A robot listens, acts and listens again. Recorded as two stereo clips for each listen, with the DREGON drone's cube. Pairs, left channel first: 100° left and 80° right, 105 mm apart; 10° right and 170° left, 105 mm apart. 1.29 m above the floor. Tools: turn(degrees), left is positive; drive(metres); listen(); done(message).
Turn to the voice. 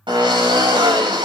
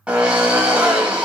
listen()
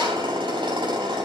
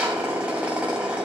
listen()
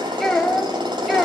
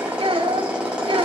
turn(degrees=-170)
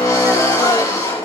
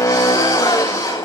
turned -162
listen()
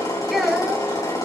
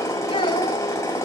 turn(degrees=10)
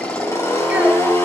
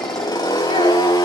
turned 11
listen()
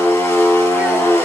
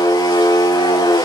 listen()
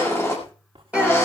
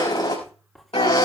done("I heard a child speaking from this way, but can't make it out now.")